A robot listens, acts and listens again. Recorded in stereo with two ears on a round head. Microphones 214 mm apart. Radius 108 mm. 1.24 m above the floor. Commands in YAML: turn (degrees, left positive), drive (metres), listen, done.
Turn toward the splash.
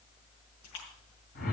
turn: 90
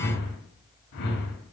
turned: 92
done: "Facing where the splash came from. I can't hear it now."